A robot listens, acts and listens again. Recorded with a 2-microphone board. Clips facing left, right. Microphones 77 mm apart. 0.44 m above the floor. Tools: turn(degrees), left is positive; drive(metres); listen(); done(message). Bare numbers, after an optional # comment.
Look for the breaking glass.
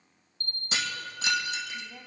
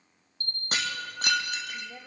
# The breaking glass: about 55° right or 125° right.
turn(-55)
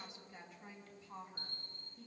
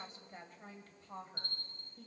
listen()
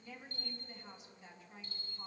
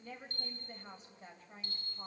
done("I heard breaking glass, but can't make it out now. It was about straight ahead or 70° right.")